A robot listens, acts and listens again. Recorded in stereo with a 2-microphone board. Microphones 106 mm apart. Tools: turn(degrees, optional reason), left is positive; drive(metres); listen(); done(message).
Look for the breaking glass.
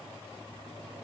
listen()
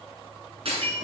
turn(degrees=-60, reason="The breaking glass: about 60° right or 120° right.")
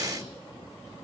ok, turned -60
listen()
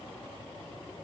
done("I heard breaking glass, but can't make it out now. It was about straight ahead or 60° right.")